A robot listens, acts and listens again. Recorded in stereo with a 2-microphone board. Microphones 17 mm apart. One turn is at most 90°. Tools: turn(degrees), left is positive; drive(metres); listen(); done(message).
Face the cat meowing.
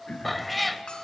turn(degrees=30)
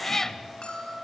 turn(degrees=90)
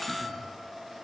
turn(degrees=60)
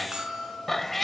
turn(degrees=15)
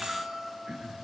listen()
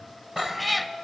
done("Found it: a cat meowing, straight ahead.")